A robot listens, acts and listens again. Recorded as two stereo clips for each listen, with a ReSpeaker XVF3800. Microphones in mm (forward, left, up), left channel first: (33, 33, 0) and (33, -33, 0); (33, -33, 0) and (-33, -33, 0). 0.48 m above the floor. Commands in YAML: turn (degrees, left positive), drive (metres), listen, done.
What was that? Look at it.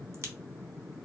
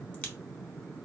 turn: -60
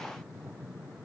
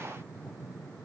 done: "Facing where the crack came from. I can't hear it now."